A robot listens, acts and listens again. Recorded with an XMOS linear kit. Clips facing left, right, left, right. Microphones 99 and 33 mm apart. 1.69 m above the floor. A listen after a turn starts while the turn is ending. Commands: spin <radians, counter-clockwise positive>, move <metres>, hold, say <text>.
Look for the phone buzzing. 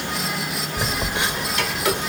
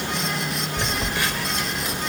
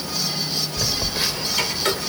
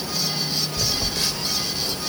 spin 0.35
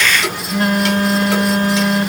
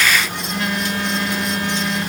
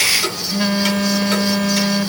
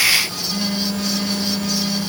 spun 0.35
spin 2.44
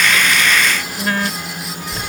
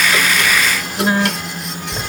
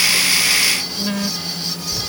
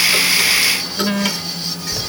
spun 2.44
spin -0.35
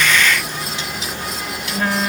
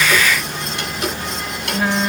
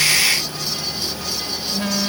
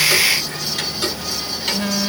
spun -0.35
say Facing the phone buzzing.